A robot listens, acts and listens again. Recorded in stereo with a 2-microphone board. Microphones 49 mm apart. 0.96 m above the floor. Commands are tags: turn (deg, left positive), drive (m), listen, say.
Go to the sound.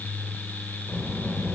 <turn deg="45"/>
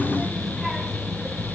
<drive m="1.0"/>
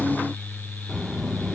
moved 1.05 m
<drive m="1.0"/>
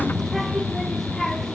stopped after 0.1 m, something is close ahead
<say>I am next to the child speaking.</say>